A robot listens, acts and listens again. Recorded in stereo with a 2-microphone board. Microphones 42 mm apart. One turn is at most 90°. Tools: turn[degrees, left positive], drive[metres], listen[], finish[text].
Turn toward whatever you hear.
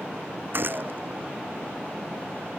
Thought: The gunshot: about 50° right or 130° right.
Action: turn[-50]
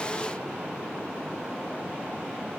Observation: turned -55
Action: listen[]
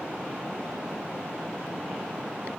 Action: finish[I heard a gunshot, but can't make it out now. It was about 5° left or 75° right.]